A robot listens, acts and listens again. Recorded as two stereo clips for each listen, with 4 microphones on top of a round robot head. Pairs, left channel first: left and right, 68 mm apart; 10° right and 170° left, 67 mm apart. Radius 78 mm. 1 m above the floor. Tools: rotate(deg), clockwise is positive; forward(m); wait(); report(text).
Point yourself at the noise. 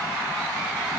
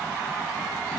wait()
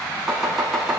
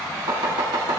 rotate(-175)
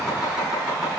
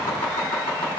rotate(10)
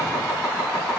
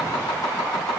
report("Facing the chopping.")